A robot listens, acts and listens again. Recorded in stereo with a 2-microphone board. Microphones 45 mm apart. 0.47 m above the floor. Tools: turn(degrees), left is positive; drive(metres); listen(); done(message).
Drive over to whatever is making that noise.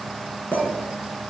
turn(degrees=45)
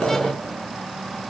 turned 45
listen()
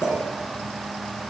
turn(degrees=90)
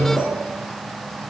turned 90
listen()
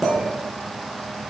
drive(metres=1.0)
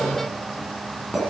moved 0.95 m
drive(metres=1.0)
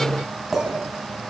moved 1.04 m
drive(metres=1.0)
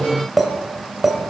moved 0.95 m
drive(metres=1.0)
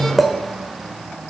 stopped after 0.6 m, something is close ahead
done("I am next to the clink.")